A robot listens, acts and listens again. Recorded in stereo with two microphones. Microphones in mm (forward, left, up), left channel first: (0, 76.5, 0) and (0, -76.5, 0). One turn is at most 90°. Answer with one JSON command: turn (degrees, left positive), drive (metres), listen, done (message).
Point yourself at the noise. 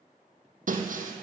{"turn": -60}
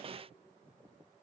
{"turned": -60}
{"listen": true}
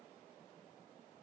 {"done": "I heard breaking glass, but can't make it out now. It was about straight ahead or 60° right."}